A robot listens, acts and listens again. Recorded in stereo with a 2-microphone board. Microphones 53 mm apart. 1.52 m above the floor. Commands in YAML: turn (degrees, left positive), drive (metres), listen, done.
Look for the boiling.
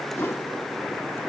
listen: true
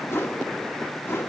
listen: true
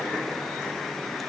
done: "I can't make out boiling to turn to."